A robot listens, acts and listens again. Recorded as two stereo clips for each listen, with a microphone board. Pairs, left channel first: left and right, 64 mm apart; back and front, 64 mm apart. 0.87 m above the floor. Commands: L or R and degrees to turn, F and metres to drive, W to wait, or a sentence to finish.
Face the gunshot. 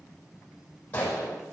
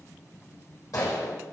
L155
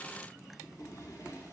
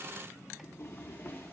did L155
Facing where the gunshot came from. I can't hear it now.